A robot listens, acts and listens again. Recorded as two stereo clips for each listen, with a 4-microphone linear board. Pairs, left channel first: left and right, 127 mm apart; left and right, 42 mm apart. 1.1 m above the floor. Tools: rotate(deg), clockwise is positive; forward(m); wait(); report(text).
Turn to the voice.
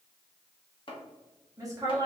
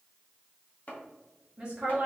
rotate(25)
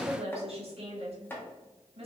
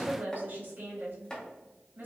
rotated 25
rotate(130)
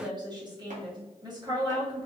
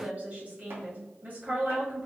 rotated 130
rotate(35)
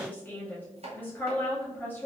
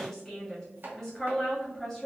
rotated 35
rotate(-15)
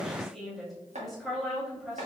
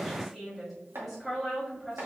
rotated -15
report("Found it: a woman speaking, straight ahead, 2 to 4 m away.")